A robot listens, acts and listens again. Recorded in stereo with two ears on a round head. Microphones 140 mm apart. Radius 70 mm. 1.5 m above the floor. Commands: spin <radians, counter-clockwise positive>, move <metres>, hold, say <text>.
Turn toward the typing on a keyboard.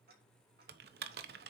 spin -1.13
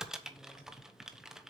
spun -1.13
say Facing the typing on a keyboard, 1 to 2 m away.